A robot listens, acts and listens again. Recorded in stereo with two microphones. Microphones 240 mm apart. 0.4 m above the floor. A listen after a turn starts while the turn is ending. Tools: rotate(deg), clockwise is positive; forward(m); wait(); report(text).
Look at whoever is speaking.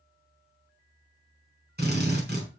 wait()
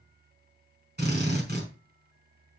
wait()
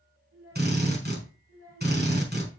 rotate(90)
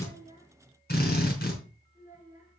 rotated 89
rotate(15)
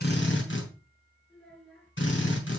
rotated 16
report("Facing the child speaking, 2 to 4 m away.")